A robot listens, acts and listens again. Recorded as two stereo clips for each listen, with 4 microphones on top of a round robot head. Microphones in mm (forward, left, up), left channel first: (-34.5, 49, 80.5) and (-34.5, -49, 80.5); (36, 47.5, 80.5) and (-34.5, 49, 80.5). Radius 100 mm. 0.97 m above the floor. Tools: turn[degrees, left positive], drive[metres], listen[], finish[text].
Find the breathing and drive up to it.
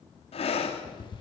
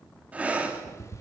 Thought: The breathing: 110° left.
Action: turn[110]
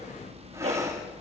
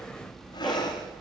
Thought: The breathing is now 25° right.
Action: turn[-25]
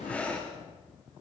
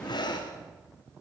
Thought: The breathing is now 10° left.
Action: turn[10]
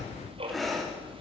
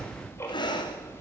Action: drive[1.0]
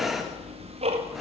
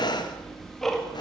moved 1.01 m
Action: drive[1.0]
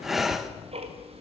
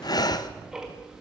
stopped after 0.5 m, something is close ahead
Action: finish[Arrived at the breathing, straight ahead.]